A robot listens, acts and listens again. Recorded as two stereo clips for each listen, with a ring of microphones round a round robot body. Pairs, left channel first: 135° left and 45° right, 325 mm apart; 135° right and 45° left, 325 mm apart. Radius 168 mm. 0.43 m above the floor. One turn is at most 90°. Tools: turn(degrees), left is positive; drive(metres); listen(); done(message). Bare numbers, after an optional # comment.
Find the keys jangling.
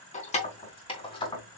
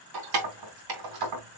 # The keys jangling: 60° left.
turn(60)
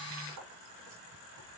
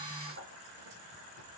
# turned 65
listen()
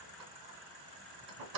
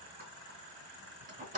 # The keys jangling is now 25° right.
turn(-25)
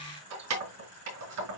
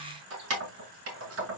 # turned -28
done("Facing the keys jangling, over 4 m away.")